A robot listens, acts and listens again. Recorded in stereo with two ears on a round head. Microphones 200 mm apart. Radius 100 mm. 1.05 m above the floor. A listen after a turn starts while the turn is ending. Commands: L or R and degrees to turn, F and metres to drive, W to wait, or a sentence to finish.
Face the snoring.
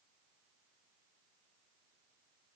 W
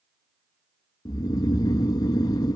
L15
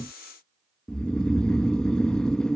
Facing the snoring.